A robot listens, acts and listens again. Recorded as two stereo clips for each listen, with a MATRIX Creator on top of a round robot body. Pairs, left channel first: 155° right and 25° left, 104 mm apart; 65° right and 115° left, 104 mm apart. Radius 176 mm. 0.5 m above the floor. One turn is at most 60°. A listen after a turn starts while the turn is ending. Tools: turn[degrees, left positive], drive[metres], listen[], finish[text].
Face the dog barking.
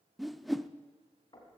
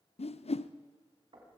Action: listen[]
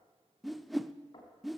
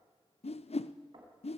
Action: listen[]
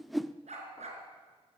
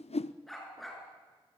Thought: The dog barking: 25° left.
Action: turn[25]
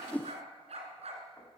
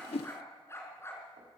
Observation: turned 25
Action: finish[Found it: a dog barking, straight ahead, 2 to 4 m away.]